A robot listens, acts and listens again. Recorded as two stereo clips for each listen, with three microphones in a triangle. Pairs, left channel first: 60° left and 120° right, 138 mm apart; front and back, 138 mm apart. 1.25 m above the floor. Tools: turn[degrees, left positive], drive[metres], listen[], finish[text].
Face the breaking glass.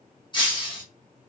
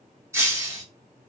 Thought: The breaking glass: 110° left.
Action: turn[110]
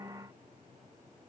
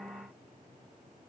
Action: finish[I heard breaking glass from this way, but can't make it out now.]